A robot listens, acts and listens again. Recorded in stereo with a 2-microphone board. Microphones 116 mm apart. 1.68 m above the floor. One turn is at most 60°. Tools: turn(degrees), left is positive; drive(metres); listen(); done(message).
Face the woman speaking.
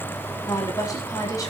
turn(degrees=30)
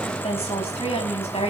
turn(degrees=60)
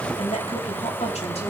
turn(degrees=60)
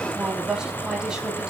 turn(degrees=-10)
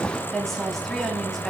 done("Facing the woman speaking.")